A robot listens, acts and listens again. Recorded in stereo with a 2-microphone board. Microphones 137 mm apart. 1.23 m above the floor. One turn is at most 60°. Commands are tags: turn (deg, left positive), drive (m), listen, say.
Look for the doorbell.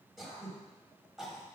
<listen/>
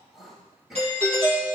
<turn deg="-50"/>
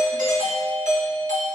<turn deg="-60"/>
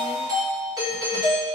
<turn deg="-30"/>
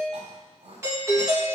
<turn deg="-20"/>
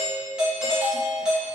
<say>Facing the doorbell.</say>